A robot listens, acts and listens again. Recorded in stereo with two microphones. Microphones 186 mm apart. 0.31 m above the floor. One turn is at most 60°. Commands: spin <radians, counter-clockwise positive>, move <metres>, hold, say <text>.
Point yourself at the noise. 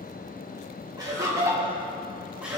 spin -0.52
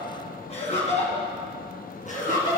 spin 0.79
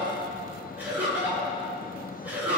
spin -0.17
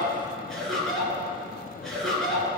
say Found it: laughter, straight ahead.